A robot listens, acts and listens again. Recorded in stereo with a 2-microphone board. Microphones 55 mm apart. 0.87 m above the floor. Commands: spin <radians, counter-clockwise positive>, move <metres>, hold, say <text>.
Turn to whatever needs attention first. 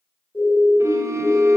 spin 0.52
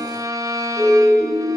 say Facing the siren.